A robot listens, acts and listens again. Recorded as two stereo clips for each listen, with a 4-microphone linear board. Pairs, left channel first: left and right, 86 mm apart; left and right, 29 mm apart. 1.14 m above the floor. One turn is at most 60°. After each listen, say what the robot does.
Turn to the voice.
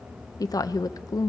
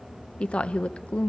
Turn 50° left.
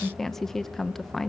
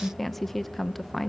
Facing the woman speaking.